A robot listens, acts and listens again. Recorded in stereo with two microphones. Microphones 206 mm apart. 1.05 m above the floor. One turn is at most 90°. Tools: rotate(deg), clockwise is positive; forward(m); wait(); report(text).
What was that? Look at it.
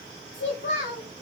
rotate(-65)
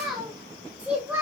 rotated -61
rotate(10)
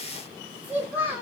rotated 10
rotate(15)
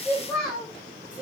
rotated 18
report("Found it: a child speaking, straight ahead.")